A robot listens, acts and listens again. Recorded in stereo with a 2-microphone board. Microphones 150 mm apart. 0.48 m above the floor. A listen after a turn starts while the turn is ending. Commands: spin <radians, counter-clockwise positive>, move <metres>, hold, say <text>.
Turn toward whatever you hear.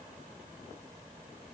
hold
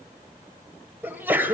spin -0.52
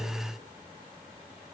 hold
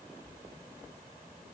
say I heard a sneeze, but can't make it out now. It was about 15° left or 135° right.